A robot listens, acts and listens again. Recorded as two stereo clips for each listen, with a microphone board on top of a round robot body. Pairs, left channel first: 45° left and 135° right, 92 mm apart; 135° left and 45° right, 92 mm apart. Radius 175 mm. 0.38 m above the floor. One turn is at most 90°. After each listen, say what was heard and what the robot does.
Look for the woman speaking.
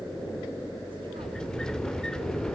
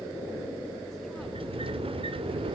Keep listening.
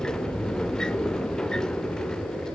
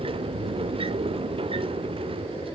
Keep listening.
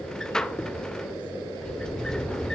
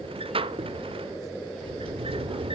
I can't make out a woman speaking, only a sliding door.